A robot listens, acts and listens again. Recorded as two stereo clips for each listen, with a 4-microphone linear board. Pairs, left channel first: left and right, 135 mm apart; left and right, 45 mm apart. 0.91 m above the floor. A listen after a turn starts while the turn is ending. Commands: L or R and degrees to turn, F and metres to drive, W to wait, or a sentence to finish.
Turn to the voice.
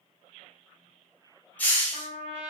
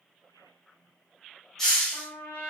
W
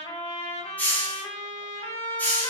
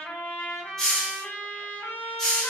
W
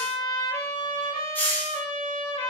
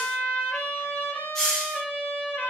I can't make out anyone speaking to turn to.